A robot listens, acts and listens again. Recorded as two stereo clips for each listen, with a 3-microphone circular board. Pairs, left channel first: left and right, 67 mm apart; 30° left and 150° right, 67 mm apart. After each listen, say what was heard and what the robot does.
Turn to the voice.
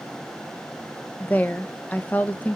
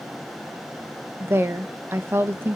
The woman speaking: 155° left. Turn 155° left.
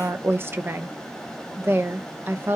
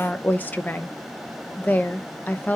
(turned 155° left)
The woman speaking is now 35° right. Turn 35° right.
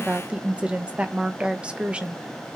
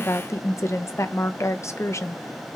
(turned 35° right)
The woman speaking is now 15° right. Turn 15° right.
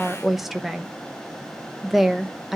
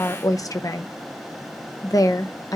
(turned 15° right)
Facing the woman speaking, under 1 m away.